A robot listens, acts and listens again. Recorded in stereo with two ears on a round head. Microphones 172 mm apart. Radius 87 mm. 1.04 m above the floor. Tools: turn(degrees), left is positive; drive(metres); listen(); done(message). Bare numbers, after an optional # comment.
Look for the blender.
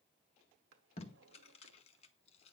listen()
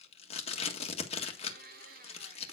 # The blender: about 45° right or 135° right.
turn(-45)
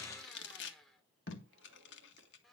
done("Facing the blender, 1 to 2 m away.")